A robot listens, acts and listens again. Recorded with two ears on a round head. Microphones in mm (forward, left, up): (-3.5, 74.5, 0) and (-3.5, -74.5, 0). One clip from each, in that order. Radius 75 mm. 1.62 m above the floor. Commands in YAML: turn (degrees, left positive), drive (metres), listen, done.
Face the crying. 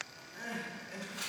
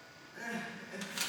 turn: 30
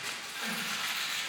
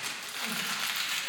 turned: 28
listen: true
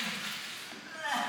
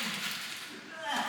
turn: 135
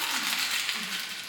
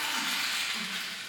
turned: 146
turn: -10
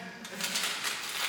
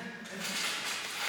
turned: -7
done: "Facing the crying."